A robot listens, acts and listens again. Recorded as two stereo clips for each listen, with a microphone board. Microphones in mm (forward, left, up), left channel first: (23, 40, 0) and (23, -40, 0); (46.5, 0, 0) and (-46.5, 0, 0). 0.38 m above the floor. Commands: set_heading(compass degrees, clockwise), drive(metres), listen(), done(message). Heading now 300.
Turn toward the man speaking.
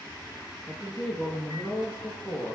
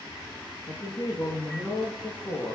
set_heading(280)
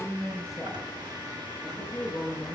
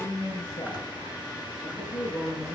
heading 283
done("Facing the man speaking.")